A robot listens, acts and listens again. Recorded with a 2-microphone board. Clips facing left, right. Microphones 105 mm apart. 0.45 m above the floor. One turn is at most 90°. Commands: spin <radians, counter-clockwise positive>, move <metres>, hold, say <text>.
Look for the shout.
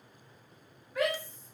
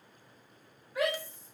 spin -0.52
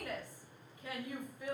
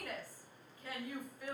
spin 0.44
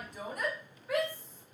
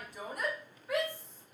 say Facing the shout, 1 to 2 m away.